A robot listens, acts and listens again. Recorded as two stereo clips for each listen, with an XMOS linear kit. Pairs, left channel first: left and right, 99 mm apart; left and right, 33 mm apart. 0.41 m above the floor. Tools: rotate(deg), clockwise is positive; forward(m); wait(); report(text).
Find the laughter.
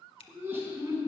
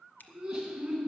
rotate(25)
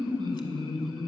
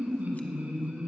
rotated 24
rotate(125)
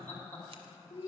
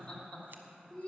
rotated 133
rotate(-30)
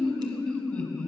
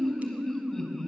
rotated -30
rotate(-15)
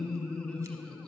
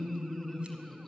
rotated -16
report("Found it: laughter, straight ahead, 2 to 4 m away.")